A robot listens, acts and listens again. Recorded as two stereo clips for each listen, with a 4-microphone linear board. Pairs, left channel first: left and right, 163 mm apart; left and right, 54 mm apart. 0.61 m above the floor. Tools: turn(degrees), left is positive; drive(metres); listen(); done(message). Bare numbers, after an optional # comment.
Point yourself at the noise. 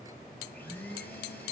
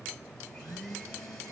turn(30)
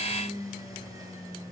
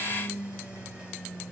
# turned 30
# So it is at 20° right.
turn(-20)
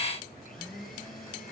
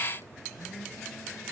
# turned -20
done("Found it: a blender, straight ahead, 2 to 4 m away.")